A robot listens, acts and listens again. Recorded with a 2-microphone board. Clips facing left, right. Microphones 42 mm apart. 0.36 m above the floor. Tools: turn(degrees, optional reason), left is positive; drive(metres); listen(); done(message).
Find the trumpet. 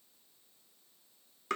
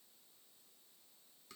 listen()
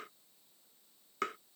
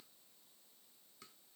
listen()
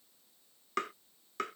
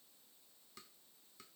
done("I can't make out a trumpet, only tapping.")